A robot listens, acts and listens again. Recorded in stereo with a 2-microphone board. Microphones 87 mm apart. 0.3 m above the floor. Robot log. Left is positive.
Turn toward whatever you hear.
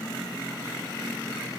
cmd idle
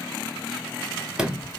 cmd yaw -30
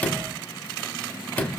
note: So it is at 15° left.
cmd yaw +15
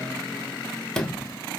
end: Facing the sliding door.